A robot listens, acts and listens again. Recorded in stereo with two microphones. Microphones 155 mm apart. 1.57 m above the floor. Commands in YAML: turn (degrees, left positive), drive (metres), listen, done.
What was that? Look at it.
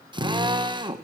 turn: -30
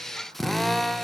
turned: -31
done: "Found it: a drill, straight ahead, 1 to 2 m away."